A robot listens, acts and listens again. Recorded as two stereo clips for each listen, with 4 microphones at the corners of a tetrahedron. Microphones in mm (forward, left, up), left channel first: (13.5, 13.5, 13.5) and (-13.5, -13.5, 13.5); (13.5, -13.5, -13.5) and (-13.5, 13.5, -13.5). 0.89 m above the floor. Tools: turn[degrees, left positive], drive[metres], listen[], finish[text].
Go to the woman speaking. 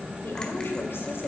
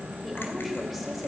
Thought: The woman speaking: 45° left.
Action: turn[45]
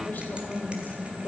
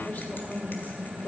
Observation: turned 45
Action: drive[1.0]
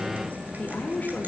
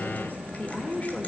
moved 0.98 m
Action: drive[1.0]
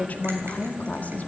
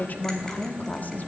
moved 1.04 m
Action: drive[1.0]
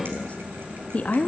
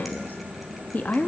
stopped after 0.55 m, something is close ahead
Thought: The woman speaking is now 10° right.
Action: turn[-10]
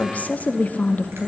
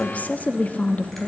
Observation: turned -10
Action: finish[I am next to the woman speaking.]